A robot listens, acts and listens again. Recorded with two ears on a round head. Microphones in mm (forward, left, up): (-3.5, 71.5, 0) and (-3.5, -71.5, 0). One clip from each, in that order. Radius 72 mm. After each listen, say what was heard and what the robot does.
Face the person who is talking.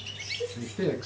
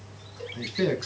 The man speaking: about 55° right or 125° right. Turn 55° right.
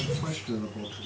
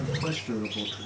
So it is at 10° right. Turn 10° right.
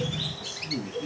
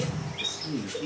Found it: a man speaking, straight ahead.